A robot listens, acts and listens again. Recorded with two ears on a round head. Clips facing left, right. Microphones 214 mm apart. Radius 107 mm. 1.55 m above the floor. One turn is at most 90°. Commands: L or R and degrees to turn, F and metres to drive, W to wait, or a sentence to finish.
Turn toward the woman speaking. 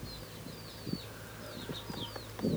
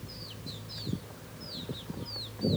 W
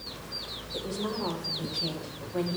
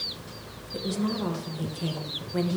R30
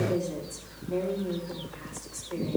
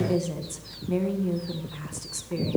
R90
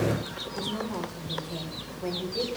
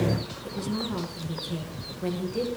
R25
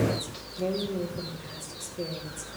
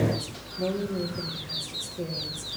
Found it: a woman speaking, straight ahead, 1 to 2 m away.